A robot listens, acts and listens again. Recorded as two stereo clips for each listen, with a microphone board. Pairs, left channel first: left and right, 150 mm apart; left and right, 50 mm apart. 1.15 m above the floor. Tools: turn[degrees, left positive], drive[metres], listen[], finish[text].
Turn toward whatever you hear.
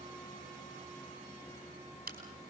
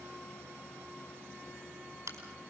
Action: turn[-90]
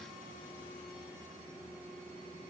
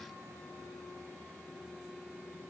Action: finish[Facing where the crack came from. I can't hear it now.]